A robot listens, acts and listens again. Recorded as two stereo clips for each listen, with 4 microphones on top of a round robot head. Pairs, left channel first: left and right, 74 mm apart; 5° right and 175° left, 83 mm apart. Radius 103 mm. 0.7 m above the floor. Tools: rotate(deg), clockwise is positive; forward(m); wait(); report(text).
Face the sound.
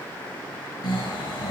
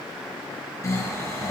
rotate(-50)
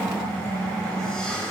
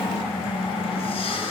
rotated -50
report("Found it: snoring, straight ahead.")